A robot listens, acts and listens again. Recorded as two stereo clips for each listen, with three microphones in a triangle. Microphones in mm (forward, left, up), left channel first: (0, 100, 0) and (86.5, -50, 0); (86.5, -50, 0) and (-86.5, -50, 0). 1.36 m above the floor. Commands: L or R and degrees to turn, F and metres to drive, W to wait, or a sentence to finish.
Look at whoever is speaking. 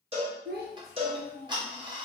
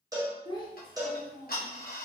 R65
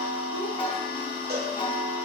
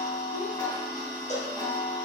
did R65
W
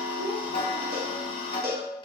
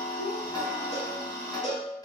W
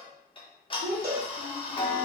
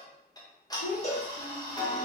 Facing the child speaking, under 1 m away.